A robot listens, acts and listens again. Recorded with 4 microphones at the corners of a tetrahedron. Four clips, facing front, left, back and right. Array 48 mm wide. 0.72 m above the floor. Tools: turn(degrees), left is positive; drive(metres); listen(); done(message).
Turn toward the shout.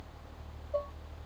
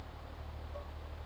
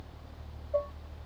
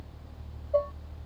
listen()
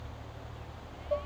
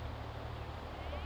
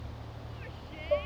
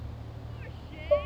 listen()
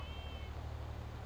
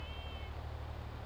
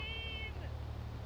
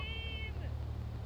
done("I can't make out a shout.")